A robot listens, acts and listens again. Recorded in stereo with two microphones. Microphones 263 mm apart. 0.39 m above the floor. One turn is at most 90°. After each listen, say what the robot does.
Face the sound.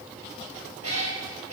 Turn 65° right.
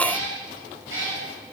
Turn 50° right.
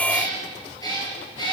Turn 15° left.
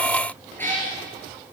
Turn 10° left.
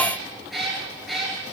Facing the cat meowing, 2 to 4 m away.